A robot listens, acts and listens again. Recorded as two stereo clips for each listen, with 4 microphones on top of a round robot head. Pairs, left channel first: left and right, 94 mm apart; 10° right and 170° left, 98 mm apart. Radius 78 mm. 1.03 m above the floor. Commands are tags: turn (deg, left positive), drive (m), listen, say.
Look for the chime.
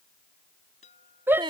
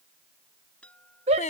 <turn deg="70"/>
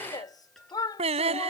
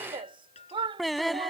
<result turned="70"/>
<say>Facing the chime.</say>